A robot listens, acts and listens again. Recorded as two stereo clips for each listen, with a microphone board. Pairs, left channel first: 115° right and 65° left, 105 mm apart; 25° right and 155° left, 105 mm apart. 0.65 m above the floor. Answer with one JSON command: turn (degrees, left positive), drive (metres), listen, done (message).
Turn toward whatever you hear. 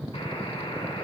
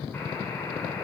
{"turn": -90}
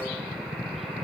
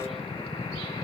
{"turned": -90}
{"turn": -25}
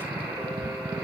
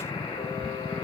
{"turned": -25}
{"turn": -10}
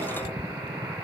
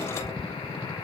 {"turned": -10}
{"done": "Facing the buzzer, 2 to 4 m away."}